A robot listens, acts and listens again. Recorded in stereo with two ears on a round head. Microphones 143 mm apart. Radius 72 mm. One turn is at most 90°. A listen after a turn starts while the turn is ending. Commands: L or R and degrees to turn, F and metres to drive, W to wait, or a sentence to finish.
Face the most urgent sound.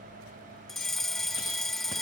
L30
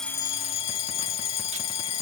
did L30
L90
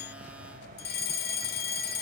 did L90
L70
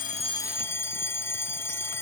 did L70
L15
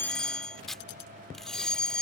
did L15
Facing the fire alarm.